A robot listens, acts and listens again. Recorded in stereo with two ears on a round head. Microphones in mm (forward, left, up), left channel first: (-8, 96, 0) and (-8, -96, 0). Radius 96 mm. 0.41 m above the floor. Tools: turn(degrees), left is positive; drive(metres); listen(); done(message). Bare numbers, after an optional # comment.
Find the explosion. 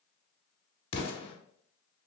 # The explosion: about 25° left or 155° left.
turn(25)
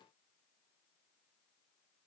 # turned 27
listen()
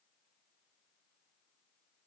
done("I heard an explosion, but can't make it out now. It was about straight ahead or 125° left.")